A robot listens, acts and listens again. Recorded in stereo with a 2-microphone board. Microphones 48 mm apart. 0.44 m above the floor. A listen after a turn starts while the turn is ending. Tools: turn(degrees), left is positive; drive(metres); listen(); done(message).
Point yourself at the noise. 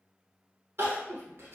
turn(degrees=-60)
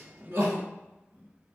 turn(degrees=-60)
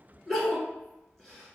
done("Facing the crying, 1 to 2 m away.")